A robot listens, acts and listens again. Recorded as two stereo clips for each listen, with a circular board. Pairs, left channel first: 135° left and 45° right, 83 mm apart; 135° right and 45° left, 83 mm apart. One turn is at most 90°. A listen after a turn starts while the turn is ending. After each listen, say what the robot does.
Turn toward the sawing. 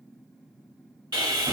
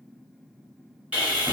Turn 25° right.
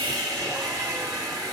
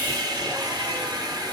Facing the sawing.